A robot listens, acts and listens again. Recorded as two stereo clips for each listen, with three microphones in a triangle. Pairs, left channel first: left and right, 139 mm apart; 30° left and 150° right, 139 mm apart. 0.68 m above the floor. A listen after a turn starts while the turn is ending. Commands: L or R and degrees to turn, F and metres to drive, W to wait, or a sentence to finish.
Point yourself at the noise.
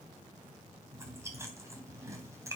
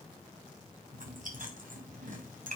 R160
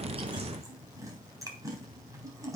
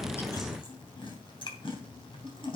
R25
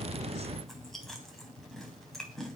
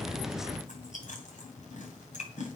Found it: chewing, straight ahead.